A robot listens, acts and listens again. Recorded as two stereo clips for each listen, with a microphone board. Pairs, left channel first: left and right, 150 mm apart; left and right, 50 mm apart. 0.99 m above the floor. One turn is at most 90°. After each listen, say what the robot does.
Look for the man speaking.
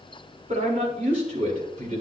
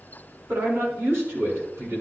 Turn 65° right.
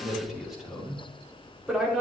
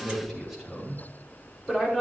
Found it: a man speaking, straight ahead, over 4 m away.